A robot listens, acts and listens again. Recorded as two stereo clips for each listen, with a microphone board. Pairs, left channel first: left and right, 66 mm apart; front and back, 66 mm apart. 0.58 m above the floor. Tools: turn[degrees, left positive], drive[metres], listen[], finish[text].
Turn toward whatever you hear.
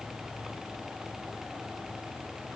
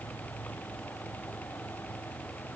Action: listen[]
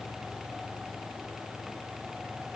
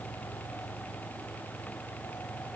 Action: listen[]
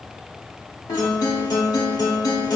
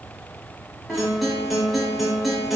Thought: The guitar: 90° left.
Action: turn[90]
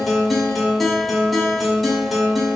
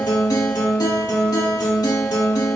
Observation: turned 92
Action: finish[Facing the guitar.]